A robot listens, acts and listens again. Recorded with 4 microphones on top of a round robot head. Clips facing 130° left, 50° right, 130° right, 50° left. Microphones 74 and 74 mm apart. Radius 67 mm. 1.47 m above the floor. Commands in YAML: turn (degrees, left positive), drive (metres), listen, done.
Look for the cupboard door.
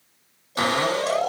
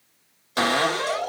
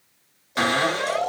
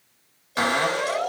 turn: -35
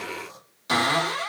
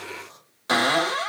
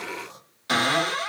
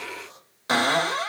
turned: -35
done: "Found it: a cupboard door, straight ahead."